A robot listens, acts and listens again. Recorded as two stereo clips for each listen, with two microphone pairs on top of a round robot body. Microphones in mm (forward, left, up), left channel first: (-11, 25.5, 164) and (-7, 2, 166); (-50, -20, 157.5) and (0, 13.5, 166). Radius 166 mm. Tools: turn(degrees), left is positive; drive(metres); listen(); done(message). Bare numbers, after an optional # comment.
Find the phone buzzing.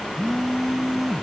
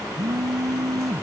done("Found it: a phone buzzing, straight ahead.")